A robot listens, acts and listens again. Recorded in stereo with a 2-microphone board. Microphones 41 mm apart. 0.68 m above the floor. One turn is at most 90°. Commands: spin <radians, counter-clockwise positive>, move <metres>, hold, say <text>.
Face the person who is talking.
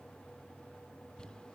hold
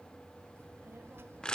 spin -1.22
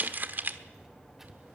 say Found it: a child speaking, straight ahead, 1 to 2 m away.